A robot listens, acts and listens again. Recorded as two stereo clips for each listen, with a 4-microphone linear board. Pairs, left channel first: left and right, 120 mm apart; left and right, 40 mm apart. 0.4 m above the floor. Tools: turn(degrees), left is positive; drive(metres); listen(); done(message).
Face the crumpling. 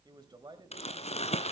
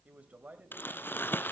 turn(degrees=65)
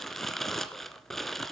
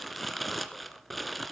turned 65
done("Found it: crumpling, straight ahead, 1 to 2 m away.")